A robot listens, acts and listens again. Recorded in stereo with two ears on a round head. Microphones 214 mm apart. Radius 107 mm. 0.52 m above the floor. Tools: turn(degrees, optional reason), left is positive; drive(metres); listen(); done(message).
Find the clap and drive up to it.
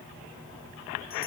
listen()
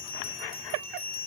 listen()
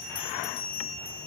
done("I can't make out a clap to turn to.")